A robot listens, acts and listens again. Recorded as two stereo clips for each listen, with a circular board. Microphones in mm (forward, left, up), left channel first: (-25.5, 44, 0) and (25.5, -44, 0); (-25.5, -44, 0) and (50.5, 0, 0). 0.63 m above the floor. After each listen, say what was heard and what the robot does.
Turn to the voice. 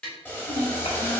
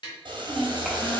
The child speaking: 125° left. Turn 125° left.
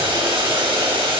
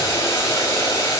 Keep listening.
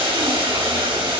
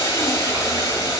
Keep listening.
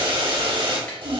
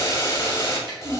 The child speaking is now 20° right. Turn 20° right.
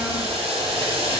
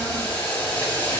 Keep listening.
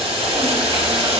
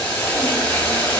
Keep listening.
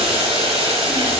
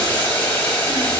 Facing where the child speaking came from. I can't hear it now.